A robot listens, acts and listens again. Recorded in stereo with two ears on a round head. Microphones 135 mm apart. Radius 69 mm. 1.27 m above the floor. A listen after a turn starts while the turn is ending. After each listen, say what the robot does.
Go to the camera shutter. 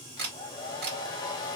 Turn 90° right.
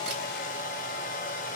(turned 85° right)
Keep listening.
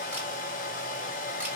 Keep listening.
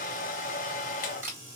Turn 15° right.
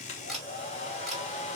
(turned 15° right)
Drive 1.0 m forward.
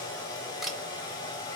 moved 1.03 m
Drive 1.0 m forward.
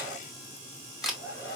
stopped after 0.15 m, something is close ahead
Arrived at the camera shutter, straight ahead.